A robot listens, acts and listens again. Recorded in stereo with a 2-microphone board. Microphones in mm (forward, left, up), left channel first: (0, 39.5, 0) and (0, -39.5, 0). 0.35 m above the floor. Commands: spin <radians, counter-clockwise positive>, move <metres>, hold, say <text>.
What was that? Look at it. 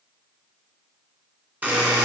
spin -0.35
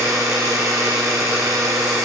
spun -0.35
spin -2.44
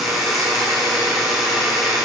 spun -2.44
say Facing the buzzer, 2 to 4 m away.